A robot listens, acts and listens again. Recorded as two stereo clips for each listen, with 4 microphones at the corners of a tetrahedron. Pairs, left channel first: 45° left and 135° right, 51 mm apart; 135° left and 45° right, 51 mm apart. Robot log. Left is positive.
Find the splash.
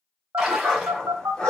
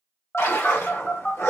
note: The splash: 145° left.
cmd yaw +145
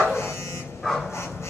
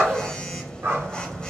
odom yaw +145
end: I heard a splash from this way, but can't make it out now.